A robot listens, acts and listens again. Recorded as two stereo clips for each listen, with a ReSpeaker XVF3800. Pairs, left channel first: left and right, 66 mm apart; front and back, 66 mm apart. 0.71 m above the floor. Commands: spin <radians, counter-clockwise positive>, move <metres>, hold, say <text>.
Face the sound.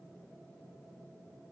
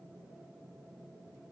hold
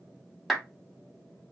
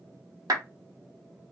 spin 3.14
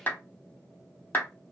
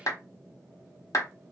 spin 0.52
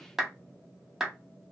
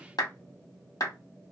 say Facing the clap, 1 to 2 m away.